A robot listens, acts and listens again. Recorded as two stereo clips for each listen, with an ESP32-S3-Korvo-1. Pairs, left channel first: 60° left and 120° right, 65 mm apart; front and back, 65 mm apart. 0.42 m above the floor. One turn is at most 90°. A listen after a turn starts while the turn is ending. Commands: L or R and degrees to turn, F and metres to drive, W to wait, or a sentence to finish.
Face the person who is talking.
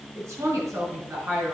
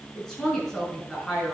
R80
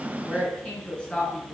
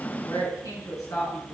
R10
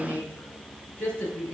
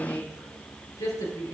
Facing the woman speaking.